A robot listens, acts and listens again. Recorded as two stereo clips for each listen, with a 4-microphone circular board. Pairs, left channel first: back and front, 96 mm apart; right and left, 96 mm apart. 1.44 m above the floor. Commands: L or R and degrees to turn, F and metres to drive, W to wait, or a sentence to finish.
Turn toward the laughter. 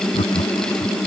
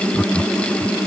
R170
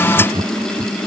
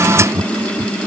L30
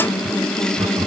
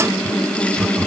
L10
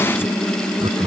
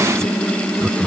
Found it: laughter, straight ahead.